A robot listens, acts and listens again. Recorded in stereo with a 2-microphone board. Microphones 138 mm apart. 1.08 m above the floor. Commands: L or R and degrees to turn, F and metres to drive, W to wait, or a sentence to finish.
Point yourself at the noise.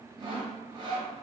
R35
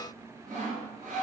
R110
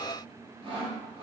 R40
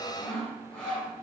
L10
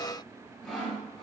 Facing the sawing.